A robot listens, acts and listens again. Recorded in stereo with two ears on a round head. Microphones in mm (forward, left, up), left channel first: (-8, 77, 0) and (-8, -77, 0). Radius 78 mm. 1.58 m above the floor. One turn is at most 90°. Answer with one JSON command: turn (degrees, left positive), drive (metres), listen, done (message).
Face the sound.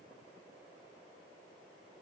{"listen": true}
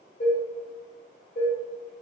{"turn": 45}
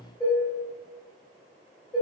{"done": "Facing the dishes clattering."}